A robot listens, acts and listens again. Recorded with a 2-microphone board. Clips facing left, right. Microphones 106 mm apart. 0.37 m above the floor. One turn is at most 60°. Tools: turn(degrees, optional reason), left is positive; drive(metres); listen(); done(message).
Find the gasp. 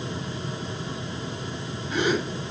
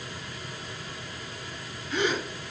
turn(degrees=35, reason="The gasp: about 35° left or 145° left.")
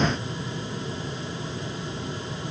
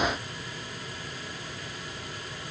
listen()
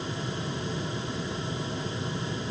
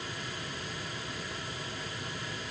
done("I heard a gasp, but can't make it out now. It was about straight ahead or 110° left.")